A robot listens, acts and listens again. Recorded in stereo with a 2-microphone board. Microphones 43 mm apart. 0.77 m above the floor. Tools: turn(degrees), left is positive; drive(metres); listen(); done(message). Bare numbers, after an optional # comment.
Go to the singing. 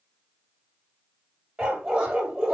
listen()
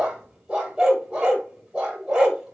listen()
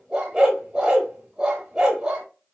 done("I can't make out singing, only a dog barking.")